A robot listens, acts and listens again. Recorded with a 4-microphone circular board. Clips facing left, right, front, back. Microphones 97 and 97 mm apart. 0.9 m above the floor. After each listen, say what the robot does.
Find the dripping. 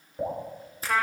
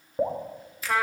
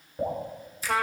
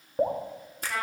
Turn 135° right.
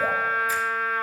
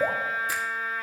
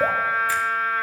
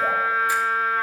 Turn 25° right.
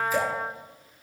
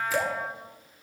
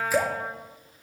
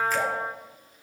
Found it: dripping, straight ahead.